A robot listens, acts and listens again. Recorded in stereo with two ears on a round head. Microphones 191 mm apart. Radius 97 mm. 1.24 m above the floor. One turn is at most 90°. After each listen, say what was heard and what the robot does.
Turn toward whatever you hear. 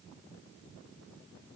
Keep listening.
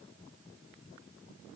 Keep listening.
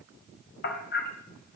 The hammering: about 45° left or 135° left. Turn 45° left.
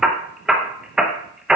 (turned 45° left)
Found it: hammering, straight ahead.